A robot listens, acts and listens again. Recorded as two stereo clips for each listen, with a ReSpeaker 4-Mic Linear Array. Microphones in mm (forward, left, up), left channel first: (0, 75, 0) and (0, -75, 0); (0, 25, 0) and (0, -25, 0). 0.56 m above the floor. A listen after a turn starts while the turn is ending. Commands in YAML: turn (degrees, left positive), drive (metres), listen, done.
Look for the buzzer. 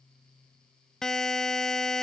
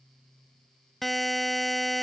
turn: 30
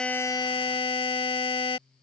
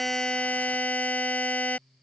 turn: 145
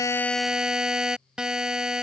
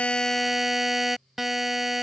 done: "Found it: a buzzer, straight ahead."